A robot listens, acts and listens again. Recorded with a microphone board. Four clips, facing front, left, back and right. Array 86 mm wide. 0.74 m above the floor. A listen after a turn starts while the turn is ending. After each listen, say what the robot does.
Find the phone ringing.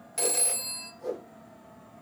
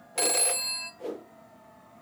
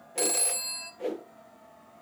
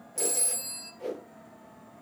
Turn 95° left.
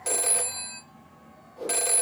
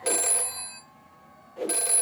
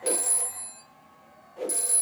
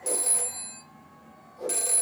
Turn 20° left.
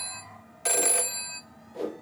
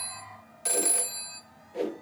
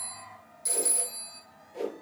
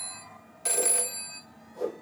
Found it: a phone ringing, straight ahead, 1 to 2 m away.